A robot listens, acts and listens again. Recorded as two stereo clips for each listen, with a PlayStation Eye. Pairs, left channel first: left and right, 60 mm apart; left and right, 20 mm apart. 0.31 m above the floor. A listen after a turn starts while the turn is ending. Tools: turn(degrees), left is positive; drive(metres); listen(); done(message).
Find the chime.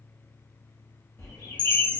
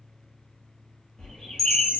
turn(degrees=15)
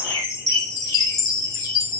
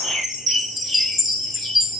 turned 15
done("Found it: a chime, straight ahead, under 1 m away.")